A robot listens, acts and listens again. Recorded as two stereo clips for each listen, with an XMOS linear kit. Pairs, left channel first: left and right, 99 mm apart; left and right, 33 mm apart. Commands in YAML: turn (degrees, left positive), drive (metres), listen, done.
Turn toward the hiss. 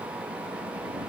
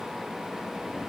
listen: true
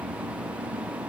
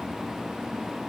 listen: true
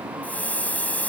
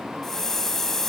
turn: 30
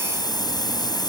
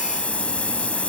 turn: 135
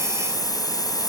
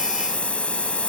turn: 45
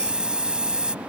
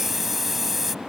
turn: -10
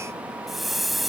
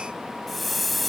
done: "Facing the hiss."